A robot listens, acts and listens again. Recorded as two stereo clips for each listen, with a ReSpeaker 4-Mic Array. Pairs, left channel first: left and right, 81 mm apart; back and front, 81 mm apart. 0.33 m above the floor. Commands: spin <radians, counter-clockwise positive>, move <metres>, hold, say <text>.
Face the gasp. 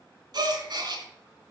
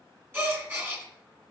spin -1.13
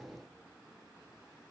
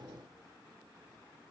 say I heard a gasp from this way, but can't make it out now.